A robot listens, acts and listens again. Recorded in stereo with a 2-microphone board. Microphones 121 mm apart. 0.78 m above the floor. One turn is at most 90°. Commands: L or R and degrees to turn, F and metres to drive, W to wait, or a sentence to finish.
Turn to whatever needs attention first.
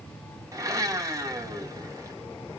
W
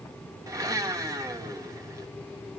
W
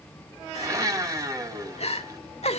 L60
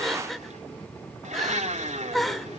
Found it: crying, straight ahead, under 1 m away.